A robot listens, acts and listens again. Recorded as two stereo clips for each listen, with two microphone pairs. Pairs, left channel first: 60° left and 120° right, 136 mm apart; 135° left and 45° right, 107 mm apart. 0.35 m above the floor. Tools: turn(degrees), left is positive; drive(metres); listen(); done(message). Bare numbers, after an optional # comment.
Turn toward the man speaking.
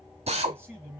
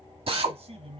# The man speaking: 45° right.
turn(-45)
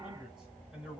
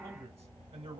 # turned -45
# The man speaking is now 40° right.
turn(-40)
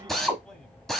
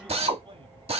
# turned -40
# The man speaking is now 20° right.
turn(-20)
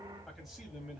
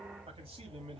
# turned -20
# The man speaking is now 35° right.
turn(-35)
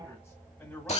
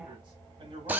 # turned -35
# The man speaking is now 15° right.
turn(-15)
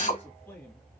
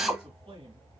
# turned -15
# The man speaking is now 10° right.
turn(-10)
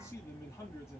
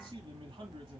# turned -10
done("Found it: a man speaking, straight ahead, 1 to 2 m away.")